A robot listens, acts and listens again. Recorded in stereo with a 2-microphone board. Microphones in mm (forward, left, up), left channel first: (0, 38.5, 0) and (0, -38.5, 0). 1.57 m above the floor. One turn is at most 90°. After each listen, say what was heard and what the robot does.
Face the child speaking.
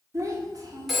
The child speaking: about 55° right or 125° right. Turn 55° right.
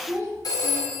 So it is at 40° right. Turn 40° right.
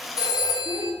The child speaking is now 20° left. Turn 20° left.
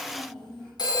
The child speaking is now 10° left. Turn 10° left.
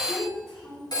Facing the child speaking, 2 to 4 m away.